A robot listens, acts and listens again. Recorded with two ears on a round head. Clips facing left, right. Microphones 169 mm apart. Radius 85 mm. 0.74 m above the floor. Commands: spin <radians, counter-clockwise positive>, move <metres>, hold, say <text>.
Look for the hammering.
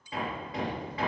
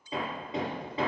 spin -0.35
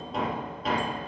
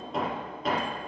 say Facing the hammering, over 4 m away.